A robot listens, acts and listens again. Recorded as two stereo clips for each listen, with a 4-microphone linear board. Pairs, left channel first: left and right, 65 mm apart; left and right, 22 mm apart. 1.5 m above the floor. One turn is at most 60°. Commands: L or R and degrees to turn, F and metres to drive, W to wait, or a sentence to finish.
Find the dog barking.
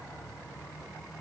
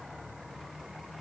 W
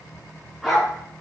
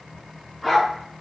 R30
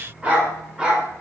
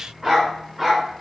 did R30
R30
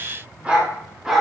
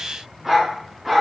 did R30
R30
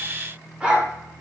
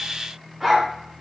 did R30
R30
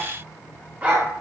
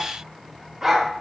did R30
R60
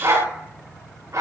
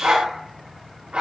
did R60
R60
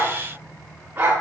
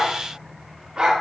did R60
R30
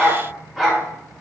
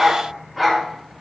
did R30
Found it: a dog barking, straight ahead, 1 to 2 m away.